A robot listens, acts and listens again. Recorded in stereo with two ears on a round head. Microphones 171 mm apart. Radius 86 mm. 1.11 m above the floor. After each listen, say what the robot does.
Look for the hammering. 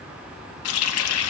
Keep listening.
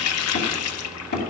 Turn 55° left.
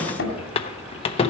Turn 70° left.
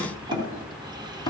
Turn 20° left.
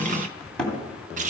Facing the hammering.